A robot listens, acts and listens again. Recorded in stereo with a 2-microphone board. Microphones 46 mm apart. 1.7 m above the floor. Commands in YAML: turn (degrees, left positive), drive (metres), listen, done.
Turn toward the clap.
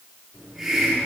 listen: true
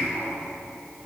listen: true
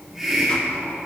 done: "I can't make out a clap to turn to."